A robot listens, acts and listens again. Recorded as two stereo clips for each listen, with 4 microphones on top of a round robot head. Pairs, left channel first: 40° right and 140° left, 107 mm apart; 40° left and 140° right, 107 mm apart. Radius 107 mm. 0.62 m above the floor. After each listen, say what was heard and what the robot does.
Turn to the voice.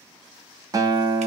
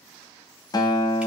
Keep listening.
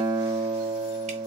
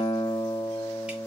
Keep listening.
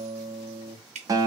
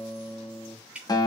I can't make out anyone speaking to turn to.